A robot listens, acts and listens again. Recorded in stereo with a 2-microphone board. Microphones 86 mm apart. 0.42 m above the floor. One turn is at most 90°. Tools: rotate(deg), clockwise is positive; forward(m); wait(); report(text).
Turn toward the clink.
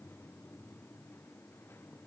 wait()
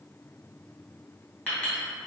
rotate(-30)
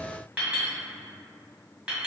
rotate(15)
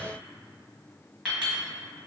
report("Found it: a clink, straight ahead, 1 to 2 m away.")